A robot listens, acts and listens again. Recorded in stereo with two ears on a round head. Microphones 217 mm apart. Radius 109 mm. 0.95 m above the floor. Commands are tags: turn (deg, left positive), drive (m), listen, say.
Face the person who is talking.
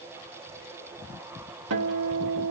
<listen/>
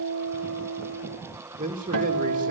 <turn deg="-35"/>
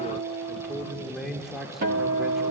<say>Facing the man speaking, 2 to 4 m away.</say>